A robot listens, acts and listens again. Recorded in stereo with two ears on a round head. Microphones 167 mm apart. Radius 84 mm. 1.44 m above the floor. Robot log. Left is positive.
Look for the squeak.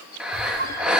note: The squeak: about 55° right or 125° right.
cmd yaw -55
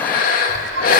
note: So it is at 70° right.
cmd yaw -70
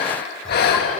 end: Found it: a squeak, straight ahead.